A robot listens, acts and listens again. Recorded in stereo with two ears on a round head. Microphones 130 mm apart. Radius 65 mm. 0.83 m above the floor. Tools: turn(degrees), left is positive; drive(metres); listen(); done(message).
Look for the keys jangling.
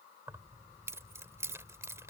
turn(degrees=-20)
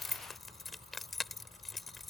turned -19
done("Found it: keys jangling, straight ahead.")